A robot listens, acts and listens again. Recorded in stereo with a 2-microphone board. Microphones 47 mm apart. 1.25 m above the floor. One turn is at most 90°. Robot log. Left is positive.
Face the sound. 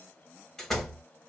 cmd yaw +30
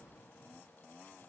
cmd idle
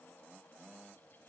end: I heard a door slam, but can't make it out now. It was about 20° right or 140° left.